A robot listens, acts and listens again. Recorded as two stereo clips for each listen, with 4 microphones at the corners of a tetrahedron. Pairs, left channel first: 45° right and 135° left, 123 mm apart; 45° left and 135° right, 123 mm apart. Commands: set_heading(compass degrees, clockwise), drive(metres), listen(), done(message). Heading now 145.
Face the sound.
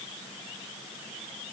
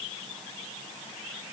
listen()
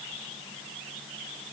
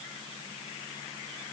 listen()
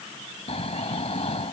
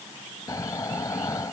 set_heading(160)
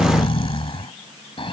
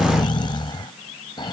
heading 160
done("Facing the snoring.")